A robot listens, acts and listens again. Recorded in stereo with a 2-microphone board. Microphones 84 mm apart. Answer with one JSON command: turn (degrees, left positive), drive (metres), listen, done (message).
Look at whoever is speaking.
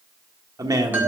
{"turn": -45}
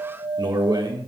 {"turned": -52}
{"turn": -70}
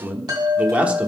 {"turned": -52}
{"turn": -15}
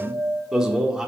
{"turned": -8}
{"turn": -10}
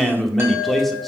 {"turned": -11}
{"done": "Facing the man speaking."}